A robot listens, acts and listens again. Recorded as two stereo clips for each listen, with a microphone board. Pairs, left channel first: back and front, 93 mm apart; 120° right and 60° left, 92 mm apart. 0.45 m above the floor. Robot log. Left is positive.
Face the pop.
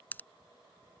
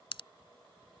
note: The pop: 110° right.
cmd yaw -110
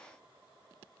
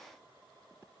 end: Facing where the pop came from. I can't hear it now.